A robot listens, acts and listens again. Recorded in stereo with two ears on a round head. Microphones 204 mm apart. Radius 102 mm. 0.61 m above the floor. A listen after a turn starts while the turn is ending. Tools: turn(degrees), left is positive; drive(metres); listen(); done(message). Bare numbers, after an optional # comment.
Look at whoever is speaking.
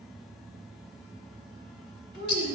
# The child speaking: about 55° left or 125° left.
turn(55)
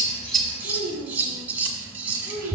# So it is at 70° left.
turn(70)
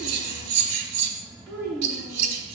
# The child speaking is now 15° right.
turn(-15)
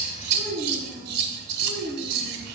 done("Facing the child speaking.")